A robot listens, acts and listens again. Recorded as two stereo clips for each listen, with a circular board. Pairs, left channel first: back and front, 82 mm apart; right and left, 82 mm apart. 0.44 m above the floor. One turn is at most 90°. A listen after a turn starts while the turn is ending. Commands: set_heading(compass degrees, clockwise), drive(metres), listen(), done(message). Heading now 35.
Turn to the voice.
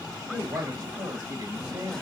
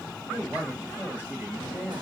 set_heading(10)
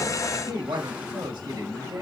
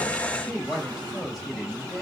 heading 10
done("Found it: a woman speaking, straight ahead.")